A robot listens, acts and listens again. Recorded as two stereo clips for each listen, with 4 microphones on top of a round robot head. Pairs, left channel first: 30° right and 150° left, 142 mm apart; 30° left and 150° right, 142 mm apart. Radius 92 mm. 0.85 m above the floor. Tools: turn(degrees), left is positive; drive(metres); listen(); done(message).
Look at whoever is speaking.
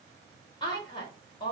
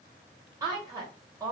turn(degrees=-85)
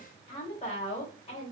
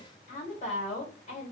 turn(degrees=10)
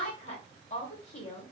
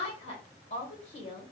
done("Facing the woman speaking, 1 to 2 m away.")